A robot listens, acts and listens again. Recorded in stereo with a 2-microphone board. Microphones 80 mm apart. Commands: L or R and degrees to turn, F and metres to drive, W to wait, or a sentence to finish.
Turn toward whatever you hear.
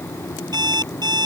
R60
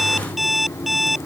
Facing the alarm clock.